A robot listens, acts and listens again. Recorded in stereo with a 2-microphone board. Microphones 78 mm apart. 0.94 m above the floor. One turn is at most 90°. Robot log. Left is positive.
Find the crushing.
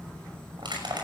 cmd yaw -90
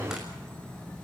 cmd idle
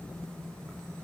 cmd idle
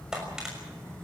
note: The crushing is now 10° right.
cmd yaw -10
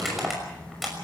end: Found it: crushing, straight ahead.